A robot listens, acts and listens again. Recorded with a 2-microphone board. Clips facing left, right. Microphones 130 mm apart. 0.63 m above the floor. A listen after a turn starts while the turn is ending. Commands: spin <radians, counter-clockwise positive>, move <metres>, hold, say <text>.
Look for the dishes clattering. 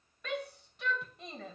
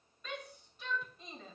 hold
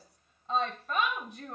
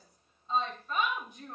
hold
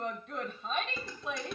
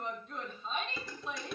spin 0.52
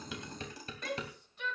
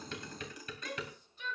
spin 2.62
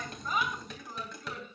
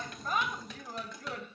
say Facing the dishes clattering.